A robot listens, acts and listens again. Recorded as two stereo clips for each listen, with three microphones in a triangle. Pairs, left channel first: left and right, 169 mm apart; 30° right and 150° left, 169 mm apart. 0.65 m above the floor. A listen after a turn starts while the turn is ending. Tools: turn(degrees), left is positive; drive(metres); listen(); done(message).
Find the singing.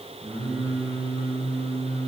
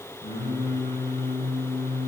turn(degrees=-10)
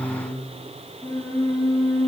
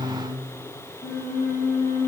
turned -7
turn(degrees=25)
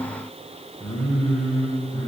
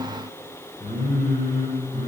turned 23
turn(degrees=20)
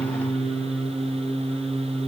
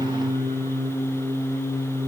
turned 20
done("Facing the singing.")